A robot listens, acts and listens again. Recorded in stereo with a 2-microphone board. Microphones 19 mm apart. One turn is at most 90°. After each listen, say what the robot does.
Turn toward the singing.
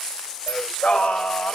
Turn 65° left.
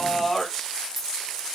Found it: singing, straight ahead.